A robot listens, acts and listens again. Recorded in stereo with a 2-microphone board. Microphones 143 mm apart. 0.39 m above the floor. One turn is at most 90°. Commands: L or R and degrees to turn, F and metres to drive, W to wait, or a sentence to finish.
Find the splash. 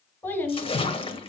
L40
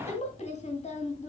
W
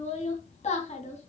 I heard a splash, but can't make it out now. It was about straight ahead or 100° left.